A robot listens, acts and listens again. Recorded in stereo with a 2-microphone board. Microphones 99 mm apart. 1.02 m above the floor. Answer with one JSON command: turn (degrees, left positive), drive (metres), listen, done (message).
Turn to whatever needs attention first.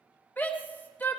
{"turn": 20}
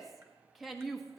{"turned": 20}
{"done": "Found it: a shout, straight ahead, 1 to 2 m away."}